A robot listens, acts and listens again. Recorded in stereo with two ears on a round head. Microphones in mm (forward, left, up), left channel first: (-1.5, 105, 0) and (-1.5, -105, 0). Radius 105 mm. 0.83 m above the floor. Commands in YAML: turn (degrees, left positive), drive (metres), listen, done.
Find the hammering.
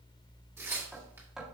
turn: 30
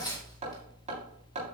turn: -30
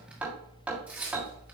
done: "Found it: hammering, straight ahead."